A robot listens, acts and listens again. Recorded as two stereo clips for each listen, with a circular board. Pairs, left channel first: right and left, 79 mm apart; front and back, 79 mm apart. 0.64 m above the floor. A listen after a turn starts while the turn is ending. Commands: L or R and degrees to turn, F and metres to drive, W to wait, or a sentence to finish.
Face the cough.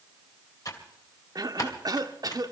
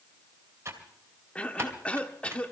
L70
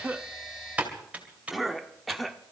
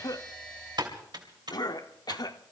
Facing the cough.